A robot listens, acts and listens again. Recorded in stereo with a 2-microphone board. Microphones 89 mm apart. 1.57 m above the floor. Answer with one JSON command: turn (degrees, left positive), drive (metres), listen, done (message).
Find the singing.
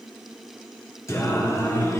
{"turn": 30}
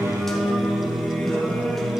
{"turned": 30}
{"done": "Facing the singing, 1 to 2 m away."}